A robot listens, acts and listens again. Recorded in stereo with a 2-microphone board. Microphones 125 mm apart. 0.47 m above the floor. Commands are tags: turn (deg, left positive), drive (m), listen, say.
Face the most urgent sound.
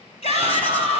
<turn deg="60"/>
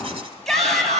<say>Found it: a shout, straight ahead.</say>